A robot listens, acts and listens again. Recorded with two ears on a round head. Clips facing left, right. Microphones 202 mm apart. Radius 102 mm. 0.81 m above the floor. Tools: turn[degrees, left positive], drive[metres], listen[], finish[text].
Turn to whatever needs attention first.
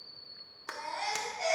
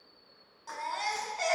Thought: The baby crying: about 75° right or 105° right.
Action: turn[-75]
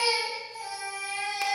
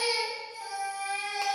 Action: finish[Found it: a baby crying, straight ahead.]